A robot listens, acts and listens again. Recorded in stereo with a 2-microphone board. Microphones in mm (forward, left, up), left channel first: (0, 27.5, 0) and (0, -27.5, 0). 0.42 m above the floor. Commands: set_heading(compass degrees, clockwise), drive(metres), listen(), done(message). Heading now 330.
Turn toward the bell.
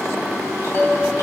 set_heading(305)
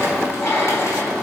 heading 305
listen()
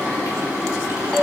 done("Facing the bell, 1 to 2 m away.")